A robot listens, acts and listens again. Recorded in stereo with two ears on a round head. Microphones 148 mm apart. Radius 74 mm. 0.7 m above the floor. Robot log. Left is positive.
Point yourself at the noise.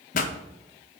note: The pop: about 50° left or 130° left.
cmd yaw +50
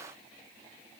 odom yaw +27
cmd idle
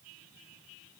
end: I heard a pop, but can't make it out now. It was about 25° left or 100° left.